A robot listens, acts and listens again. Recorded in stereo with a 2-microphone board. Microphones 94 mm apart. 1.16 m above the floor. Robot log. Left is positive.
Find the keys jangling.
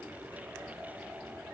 cmd idle
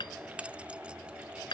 cmd yaw -30
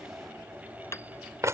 note: So it is at 145° right.
cmd yaw -145
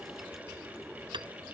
cmd idle
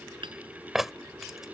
end: Facing the keys jangling.